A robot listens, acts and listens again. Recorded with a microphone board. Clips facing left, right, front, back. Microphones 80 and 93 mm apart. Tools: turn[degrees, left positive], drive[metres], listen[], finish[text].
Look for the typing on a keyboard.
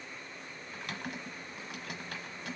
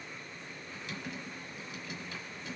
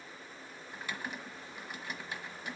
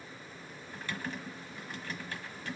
Thought: The typing on a keyboard: 75° left.
Action: turn[75]
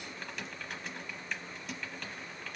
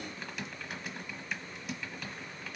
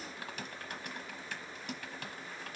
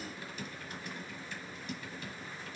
Action: finish[Found it: typing on a keyboard, straight ahead, 1 to 2 m away.]